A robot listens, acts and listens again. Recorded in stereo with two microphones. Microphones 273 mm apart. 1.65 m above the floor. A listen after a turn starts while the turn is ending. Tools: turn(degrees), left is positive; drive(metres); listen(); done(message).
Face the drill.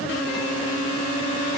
listen()
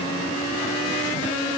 listen()
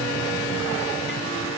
done("I can't make out a drill to turn to.")